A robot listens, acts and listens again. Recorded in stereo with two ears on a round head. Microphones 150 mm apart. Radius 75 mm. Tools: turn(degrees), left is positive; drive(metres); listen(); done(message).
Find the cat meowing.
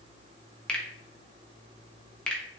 listen()
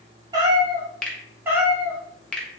turn(degrees=-30)
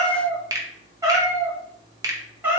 turn(degrees=-30)
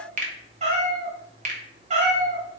turn(degrees=-135)
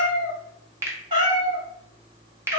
turn(degrees=-30)
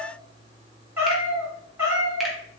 turn(degrees=-15)
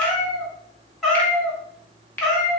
done("Found it: a cat meowing, straight ahead.")